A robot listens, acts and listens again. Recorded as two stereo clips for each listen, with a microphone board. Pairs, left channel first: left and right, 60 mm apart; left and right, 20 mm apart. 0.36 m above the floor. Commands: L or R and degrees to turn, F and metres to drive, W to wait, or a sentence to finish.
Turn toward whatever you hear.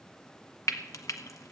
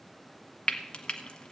L65
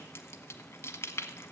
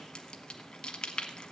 L50
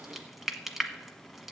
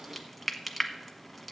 Facing the frying.